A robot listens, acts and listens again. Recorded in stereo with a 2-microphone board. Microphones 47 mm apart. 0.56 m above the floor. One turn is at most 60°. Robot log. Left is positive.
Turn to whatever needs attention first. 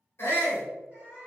note: The shout: about 60° left or 120° left.
cmd yaw +60
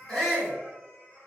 note: So it is at 25° left.
cmd yaw +25
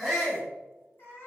note: The shout is now 20° left.
cmd yaw +20
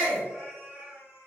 end: Found it: a shout, straight ahead.